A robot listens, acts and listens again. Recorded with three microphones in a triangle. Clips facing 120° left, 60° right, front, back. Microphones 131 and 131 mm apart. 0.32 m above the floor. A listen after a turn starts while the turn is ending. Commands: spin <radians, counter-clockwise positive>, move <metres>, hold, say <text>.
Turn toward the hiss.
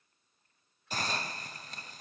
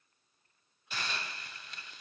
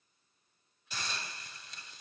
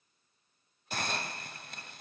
spin 2.79
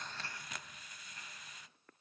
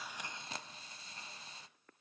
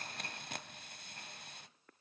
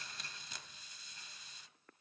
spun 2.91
say Facing the hiss.